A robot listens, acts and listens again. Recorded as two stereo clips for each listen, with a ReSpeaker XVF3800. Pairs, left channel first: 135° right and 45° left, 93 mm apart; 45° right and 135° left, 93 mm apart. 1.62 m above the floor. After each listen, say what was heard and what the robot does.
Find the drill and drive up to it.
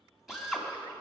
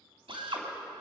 The drill: 130° left. Turn 130° left.
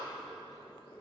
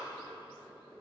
Keep listening.
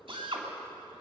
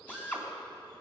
The drill is now 25° left. Turn 25° left.
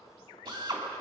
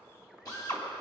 Drive 1.0 m forward.
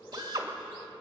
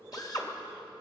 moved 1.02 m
Drive 1.0 m forward.
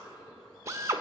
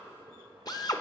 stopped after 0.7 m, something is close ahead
The drill is now 10° right. Turn 10° right.
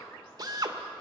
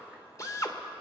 Arrived at the drill, straight ahead.